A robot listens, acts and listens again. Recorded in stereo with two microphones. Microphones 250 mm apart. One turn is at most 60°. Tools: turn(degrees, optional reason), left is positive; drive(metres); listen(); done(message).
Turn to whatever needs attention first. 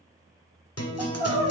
turn(degrees=-30)
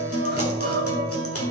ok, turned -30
turn(degrees=-60, reason="So it is at 135° right.")
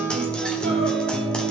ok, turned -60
turn(degrees=-60, reason="Nothing new. It was at 75° right.")
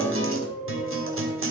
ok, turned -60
turn(degrees=-10, reason="The crying is now 10° right.")
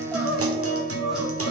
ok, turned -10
done("Facing the crying, 1 to 2 m away.")